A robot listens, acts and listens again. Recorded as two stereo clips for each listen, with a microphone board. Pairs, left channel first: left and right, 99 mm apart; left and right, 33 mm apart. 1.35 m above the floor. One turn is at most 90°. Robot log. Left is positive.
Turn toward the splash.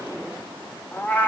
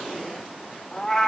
cmd idle
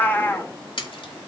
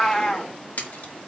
note: The splash: about 60° left or 120° left.
cmd yaw +60
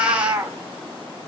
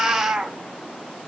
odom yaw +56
cmd idle
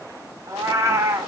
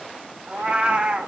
end: I heard a splash, but can't make it out now. It was about 5° left or 65° left.